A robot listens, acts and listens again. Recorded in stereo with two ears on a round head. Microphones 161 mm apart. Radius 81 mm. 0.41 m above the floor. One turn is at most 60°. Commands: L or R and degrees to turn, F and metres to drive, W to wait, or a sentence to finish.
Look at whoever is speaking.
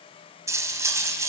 W
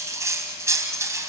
W
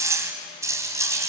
I can't make out anyone speaking to turn to.